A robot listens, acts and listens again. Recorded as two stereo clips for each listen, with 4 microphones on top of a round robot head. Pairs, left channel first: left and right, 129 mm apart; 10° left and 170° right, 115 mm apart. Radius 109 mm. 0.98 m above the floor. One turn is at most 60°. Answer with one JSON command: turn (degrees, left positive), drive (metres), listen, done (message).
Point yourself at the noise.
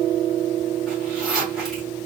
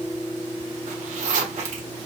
{"turn": 60}
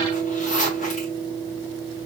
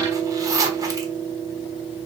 {"turn": 60}
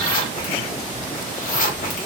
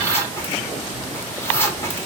{"turn": 60}
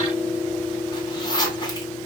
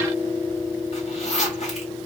{"turn": 35}
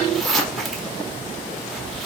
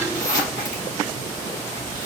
{"done": "Facing the zipper."}